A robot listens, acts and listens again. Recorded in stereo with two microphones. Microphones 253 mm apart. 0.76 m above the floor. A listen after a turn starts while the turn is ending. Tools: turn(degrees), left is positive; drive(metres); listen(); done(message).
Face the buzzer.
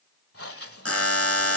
turn(degrees=65)
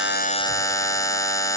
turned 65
turn(degrees=15)
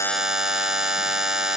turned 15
done("Found it: a buzzer, straight ahead.")